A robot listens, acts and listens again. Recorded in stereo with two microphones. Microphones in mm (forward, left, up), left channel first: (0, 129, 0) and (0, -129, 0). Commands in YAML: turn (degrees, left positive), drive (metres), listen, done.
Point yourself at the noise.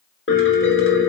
turn: 55
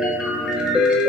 done: "Found it: a piano, straight ahead."